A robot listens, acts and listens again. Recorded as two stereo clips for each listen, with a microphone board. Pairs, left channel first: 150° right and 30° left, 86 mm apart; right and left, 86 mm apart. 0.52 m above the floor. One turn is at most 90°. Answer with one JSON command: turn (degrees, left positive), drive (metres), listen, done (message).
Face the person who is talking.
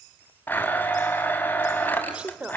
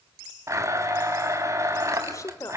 {"turn": -45}
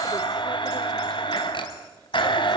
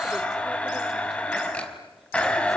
{"listen": true}
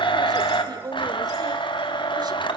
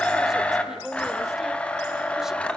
{"done": "Found it: a woman speaking, straight ahead."}